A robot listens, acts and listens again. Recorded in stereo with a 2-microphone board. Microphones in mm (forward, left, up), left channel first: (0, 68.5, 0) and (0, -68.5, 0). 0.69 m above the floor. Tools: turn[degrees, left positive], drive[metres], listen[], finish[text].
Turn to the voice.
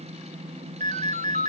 Action: listen[]
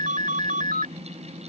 Action: listen[]
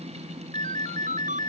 Action: finish[I can't make out anyone speaking to turn to.]